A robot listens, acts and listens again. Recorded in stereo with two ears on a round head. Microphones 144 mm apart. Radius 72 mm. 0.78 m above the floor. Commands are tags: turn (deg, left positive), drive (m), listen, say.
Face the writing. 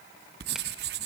<turn deg="-70"/>
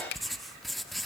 <say>Found it: writing, straight ahead.</say>